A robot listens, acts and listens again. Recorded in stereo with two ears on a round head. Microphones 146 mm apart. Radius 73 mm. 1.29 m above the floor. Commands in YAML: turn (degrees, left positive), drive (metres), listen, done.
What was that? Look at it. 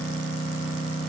listen: true
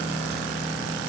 listen: true
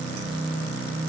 done: "I can't make out anything to turn to."